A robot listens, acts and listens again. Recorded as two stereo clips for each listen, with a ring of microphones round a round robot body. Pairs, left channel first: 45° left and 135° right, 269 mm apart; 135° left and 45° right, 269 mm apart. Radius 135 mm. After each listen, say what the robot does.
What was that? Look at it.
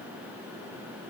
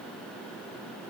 Keep listening.
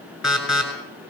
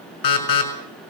Turn 135° left.
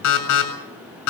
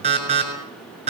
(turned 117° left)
Turn 20° left.
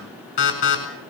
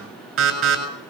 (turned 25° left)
Found it: an alarm, straight ahead, over 4 m away.